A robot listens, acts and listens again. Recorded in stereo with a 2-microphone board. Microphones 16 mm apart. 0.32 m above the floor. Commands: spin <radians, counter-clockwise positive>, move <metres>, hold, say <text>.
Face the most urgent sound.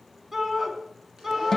spin -0.52
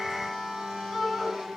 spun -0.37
spin -0.26
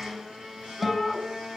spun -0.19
say Found it: a shout, straight ahead, 2 to 4 m away.